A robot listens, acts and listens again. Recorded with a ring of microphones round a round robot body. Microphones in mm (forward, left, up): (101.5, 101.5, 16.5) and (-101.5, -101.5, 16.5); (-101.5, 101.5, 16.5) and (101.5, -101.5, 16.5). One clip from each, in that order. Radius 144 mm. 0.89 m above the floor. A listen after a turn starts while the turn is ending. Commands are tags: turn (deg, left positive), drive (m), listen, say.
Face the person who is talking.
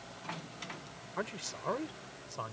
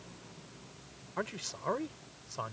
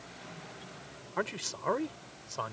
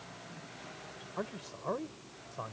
<turn deg="140"/>
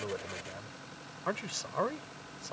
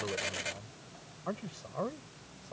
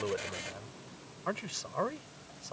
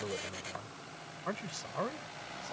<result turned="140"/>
<turn deg="65"/>
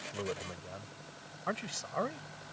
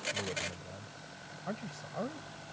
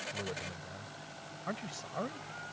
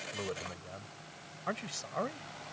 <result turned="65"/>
<turn deg="20"/>
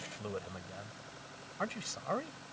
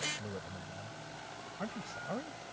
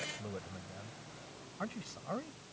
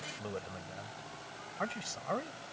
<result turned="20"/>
<turn deg="10"/>
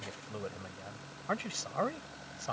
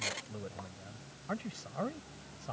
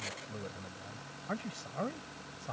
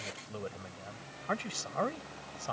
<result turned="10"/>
<say>Facing the man speaking.</say>